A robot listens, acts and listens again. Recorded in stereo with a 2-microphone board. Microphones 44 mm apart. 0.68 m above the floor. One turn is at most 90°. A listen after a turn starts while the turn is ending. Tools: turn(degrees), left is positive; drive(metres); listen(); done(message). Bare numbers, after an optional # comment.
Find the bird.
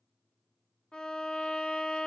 listen()
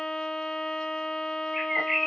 turn(-30)
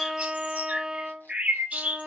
# So it is at 145° right.
turn(-90)
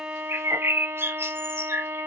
# The bird is now 75° right.
turn(-75)
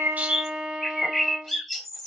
done("Found it: a bird, straight ahead.")